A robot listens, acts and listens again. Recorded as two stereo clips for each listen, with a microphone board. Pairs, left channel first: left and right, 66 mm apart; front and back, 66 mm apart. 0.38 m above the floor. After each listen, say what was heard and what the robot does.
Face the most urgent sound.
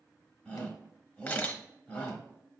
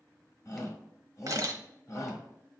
The shout: 20° left. Turn 20° left.
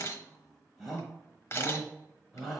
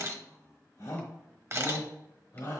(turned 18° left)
Found it: a shout, straight ahead.